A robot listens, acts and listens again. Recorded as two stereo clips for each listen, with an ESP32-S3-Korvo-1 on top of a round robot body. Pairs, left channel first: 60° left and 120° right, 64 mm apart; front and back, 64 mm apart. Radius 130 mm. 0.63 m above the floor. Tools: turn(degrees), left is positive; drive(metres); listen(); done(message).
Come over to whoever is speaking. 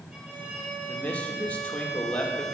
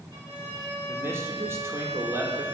turn(degrees=130)
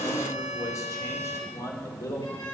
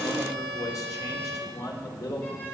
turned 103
turn(degrees=25)
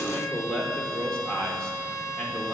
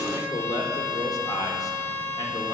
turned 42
turn(degrees=-15)
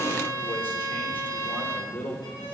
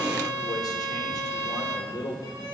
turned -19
drive(metres=1.0)
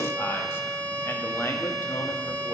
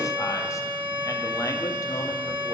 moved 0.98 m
listen()
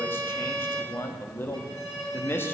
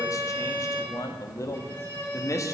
turn(degrees=15)
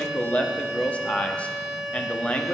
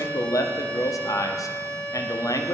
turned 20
drive(metres=1.0)
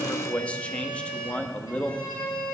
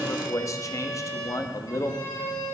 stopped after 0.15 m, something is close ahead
done("I am next to the man speaking.")